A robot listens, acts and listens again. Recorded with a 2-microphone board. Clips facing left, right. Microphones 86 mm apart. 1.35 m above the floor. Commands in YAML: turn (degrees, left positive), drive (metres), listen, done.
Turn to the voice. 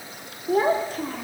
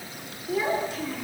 turn: 45
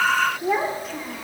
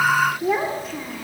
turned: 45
done: "Found it: a child speaking, straight ahead."